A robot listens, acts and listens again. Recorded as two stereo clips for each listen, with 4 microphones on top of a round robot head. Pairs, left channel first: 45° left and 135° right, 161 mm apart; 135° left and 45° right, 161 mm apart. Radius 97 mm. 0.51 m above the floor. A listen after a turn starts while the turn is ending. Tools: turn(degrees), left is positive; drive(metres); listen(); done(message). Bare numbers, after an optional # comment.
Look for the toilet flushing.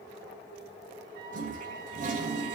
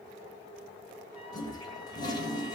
# The toilet flushing: 165° right.
turn(-165)
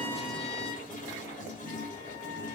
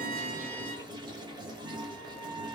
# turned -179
# The toilet flushing is now 15° left.
turn(15)
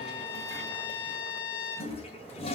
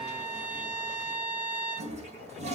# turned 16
done("Facing the toilet flushing, 2 to 4 m away.")